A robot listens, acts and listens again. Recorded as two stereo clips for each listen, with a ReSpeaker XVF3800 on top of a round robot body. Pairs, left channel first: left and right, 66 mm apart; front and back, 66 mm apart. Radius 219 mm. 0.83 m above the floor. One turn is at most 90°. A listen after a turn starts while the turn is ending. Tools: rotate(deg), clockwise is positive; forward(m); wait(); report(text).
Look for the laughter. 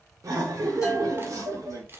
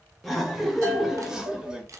rotate(90)
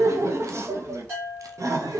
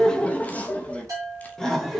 rotate(85)
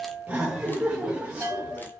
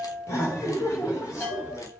rotate(20)
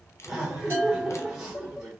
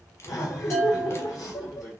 report("Found it: laughter, straight ahead, 1 to 2 m away.")